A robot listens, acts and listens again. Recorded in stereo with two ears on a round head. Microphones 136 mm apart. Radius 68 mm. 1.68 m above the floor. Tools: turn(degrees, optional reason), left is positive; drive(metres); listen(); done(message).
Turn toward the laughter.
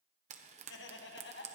turn(degrees=90)
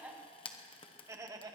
turn(degrees=-25, reason="So it is at 25° right.")
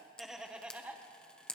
turn(degrees=-10, reason="The laughter is now 10° right.")
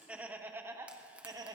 turn(degrees=-25, reason="The laughter is now 25° right.")
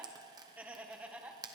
turn(degrees=-10, reason="The laughter is now 10° right.")
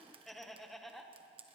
done("Facing the laughter.")